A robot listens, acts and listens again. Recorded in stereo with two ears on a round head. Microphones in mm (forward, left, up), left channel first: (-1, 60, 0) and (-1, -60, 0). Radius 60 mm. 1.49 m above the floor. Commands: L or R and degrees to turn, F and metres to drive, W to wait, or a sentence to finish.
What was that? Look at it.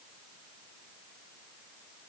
W
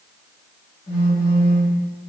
L45
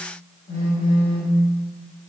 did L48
L90
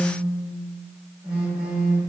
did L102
R15
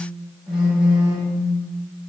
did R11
Facing the phone buzzing, 1 to 2 m away.